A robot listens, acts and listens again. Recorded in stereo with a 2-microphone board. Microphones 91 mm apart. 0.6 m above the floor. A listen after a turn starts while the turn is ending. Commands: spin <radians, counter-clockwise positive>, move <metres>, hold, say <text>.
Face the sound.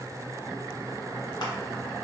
hold
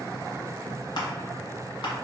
spin 0.96
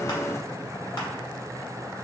hold
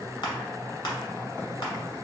spin 1.13
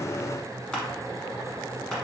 hold
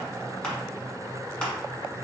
spin 0.17
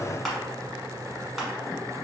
say Found it: crushing, straight ahead.